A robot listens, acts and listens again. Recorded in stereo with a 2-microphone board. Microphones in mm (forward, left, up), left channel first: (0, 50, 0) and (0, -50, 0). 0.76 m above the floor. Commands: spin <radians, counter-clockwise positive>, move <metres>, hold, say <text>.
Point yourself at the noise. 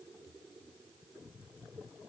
hold
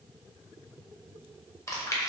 spin 0.52
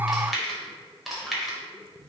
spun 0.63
say Found it: chewing, straight ahead.